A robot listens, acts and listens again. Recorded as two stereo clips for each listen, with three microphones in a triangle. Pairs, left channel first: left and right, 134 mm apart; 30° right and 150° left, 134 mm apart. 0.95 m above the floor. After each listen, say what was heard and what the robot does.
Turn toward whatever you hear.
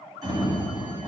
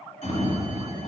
The sliding door: 35° right. Turn 35° right.
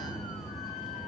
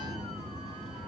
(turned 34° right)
Facing the sliding door.